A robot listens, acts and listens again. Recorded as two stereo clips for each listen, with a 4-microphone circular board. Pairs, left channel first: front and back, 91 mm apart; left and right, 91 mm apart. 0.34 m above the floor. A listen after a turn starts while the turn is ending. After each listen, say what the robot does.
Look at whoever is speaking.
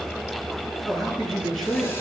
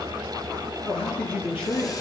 Turn 90° left.
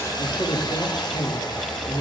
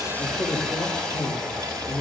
Turn 45° left.
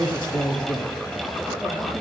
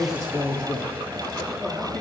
Facing the man speaking.